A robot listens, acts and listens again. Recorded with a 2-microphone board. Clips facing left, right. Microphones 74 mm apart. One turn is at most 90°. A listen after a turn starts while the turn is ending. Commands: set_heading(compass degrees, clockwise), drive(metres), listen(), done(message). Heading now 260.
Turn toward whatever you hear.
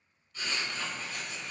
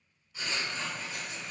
set_heading(290)
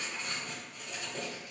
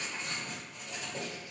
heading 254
set_heading(284)
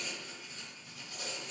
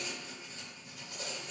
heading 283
set_heading(13)
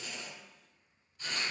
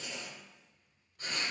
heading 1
set_heading(66)
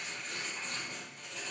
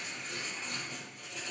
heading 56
set_heading(66)
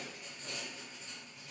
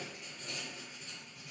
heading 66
done("Found it: writing, straight ahead, 1 to 2 m away.")